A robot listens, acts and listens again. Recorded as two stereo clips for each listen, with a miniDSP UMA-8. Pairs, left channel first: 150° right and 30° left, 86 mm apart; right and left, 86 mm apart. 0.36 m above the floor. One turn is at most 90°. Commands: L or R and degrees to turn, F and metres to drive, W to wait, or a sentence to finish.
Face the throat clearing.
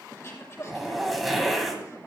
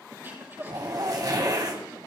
L90
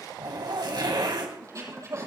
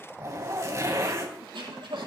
L80
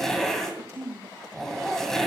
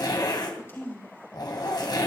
R35
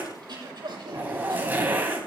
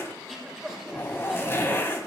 Facing the throat clearing.